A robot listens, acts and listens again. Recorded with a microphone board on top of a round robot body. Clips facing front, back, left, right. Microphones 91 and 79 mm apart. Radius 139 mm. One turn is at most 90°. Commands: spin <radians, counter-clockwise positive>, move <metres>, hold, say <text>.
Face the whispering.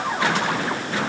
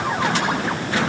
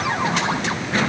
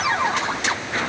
hold
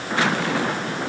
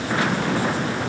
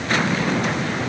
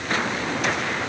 hold
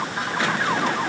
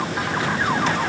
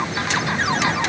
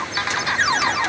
say I can't make out whispering to turn to.